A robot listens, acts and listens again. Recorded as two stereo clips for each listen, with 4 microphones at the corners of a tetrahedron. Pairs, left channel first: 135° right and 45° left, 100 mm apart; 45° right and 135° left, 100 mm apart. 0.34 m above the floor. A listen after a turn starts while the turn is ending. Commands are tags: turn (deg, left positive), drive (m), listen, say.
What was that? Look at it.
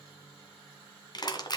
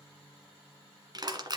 <turn deg="180"/>
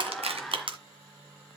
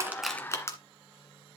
<turn deg="15"/>
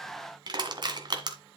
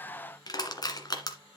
<say>Found it: crushing, straight ahead.</say>